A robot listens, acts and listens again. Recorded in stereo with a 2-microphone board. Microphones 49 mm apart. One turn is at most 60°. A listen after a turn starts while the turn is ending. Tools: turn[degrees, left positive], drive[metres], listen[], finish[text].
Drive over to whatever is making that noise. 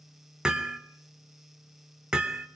Thought: The hammering: about 15° right or 165° right.
Action: turn[-15]
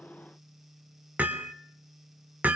Thought: So it is at 150° right.
Action: turn[-60]
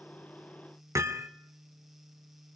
Thought: The hammering is now 75° right.
Action: turn[-60]
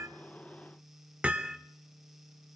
Thought: The hammering is now 25° right.
Action: turn[-25]
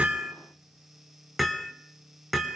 Action: drive[1.0]
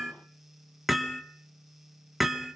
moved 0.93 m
Action: drive[1.0]
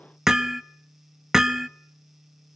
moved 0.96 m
Thought: The hammering is now 10° right.
Action: turn[-10]
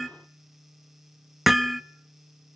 Action: drive[1.0]
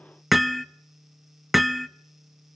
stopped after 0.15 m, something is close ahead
Action: finish[Arrived at the hammering, straight ahead.]